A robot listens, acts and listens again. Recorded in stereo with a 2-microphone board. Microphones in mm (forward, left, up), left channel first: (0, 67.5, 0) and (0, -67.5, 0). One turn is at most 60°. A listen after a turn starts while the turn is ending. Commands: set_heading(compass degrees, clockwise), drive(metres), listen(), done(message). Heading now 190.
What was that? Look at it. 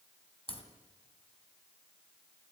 set_heading(145)
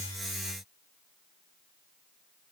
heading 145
listen()
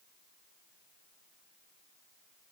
done("I heard a crack, but can't make it out now. It was about straight ahead or 90° left.")